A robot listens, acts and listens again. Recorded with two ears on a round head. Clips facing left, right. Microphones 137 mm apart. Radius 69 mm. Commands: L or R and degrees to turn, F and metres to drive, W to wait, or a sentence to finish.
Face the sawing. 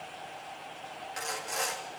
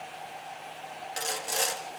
R35
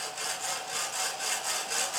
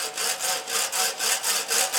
R105
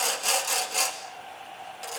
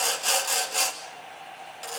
Found it: sawing, straight ahead, 2 to 4 m away.